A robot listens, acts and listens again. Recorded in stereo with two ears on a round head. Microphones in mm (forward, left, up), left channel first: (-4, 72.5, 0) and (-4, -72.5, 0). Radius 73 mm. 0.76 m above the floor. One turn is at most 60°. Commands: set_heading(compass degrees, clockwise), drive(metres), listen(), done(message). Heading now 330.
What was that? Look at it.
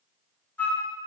set_heading(300)
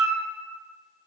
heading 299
set_heading(319)
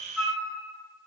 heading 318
done("Facing the flute, 1 to 2 m away.")